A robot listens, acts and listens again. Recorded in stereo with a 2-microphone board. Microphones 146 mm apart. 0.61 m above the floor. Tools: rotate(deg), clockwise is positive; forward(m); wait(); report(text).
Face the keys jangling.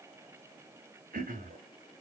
wait()
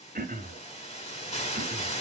wait()
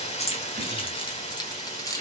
rotate(-20)
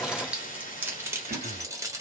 rotate(20)
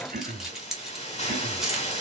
report("Facing the keys jangling.")